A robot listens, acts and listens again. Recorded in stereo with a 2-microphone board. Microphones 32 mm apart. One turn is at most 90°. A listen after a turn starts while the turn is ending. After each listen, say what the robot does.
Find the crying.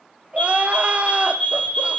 Turn 45° right.
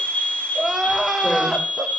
Facing the crying.